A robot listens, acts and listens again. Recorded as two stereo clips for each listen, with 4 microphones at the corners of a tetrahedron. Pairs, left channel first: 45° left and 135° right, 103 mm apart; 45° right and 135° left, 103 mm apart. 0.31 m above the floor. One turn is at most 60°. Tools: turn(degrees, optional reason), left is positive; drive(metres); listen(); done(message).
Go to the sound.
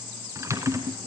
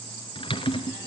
turn(degrees=-60, reason="The typing on a keyboard: 75° right.")
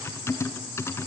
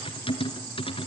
turn(degrees=-20, reason="The typing on a keyboard is now 20° right.")
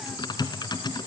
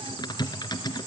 drive(metres=1.0)
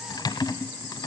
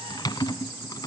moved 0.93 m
drive(metres=1.0)
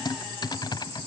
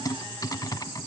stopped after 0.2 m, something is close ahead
done("I am next to the typing on a keyboard.")